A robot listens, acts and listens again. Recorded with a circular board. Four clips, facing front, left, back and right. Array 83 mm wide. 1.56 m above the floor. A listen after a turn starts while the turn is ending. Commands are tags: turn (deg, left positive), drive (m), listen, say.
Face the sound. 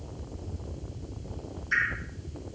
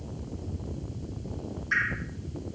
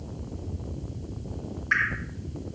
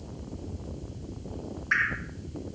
<turn deg="-150"/>
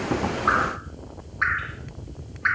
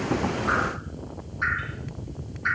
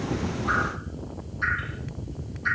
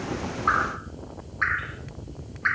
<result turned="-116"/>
<turn deg="-35"/>
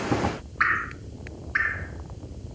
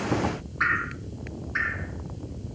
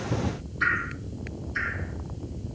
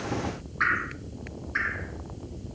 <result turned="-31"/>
<say>Facing the dripping.</say>